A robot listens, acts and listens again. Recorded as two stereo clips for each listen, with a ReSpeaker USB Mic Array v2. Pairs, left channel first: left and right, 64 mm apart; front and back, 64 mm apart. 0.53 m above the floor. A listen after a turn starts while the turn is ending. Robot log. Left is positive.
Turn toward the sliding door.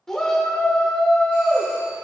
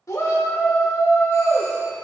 cmd idle
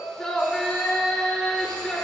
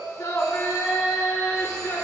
cmd idle
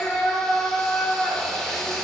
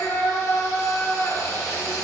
end: I can't make out a sliding door, only a shout.